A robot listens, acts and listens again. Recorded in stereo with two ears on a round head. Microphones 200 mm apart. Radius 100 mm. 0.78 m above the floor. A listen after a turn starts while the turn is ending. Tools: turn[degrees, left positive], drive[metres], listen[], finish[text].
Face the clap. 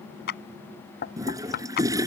Thought: The clap: about 45° left or 135° left.
Action: turn[45]
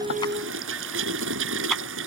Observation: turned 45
Action: listen[]
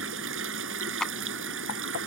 Action: finish[Facing the clap.]